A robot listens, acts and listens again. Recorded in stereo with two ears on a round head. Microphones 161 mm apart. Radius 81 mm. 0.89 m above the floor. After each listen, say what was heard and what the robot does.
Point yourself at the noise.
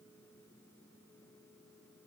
Keep listening.
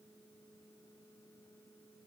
Keep listening.
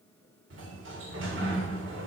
Turn 90° right.
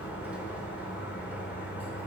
So it is at 10° right. Turn 10° right.
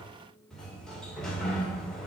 Found it: a sliding door, straight ahead.